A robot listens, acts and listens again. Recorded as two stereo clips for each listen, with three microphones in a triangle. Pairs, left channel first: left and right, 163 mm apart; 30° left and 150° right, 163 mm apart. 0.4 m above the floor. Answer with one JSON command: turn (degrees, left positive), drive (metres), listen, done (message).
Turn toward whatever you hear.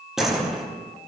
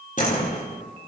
{"done": "Found it: a door slam, straight ahead, over 4 m away."}